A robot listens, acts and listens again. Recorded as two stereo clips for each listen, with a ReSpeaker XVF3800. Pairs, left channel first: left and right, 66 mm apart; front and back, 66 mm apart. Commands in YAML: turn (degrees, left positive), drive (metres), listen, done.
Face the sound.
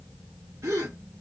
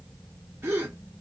turn: -125
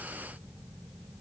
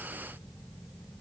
done: "Facing where the gasp came from. I can't hear it now."